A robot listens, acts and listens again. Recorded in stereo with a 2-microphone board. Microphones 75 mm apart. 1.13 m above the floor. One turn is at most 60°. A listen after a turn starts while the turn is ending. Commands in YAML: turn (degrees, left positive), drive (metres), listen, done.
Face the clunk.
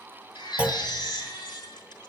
turn: -20
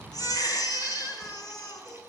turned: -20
listen: true
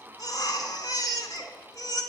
done: "I heard a clunk, but can't make it out now. It was about straight ahead or 140° right."